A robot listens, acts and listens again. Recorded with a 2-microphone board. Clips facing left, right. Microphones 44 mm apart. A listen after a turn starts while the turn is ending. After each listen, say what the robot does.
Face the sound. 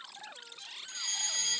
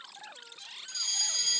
Turn 30° left.
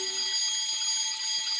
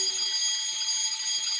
Found it: a fire alarm, straight ahead.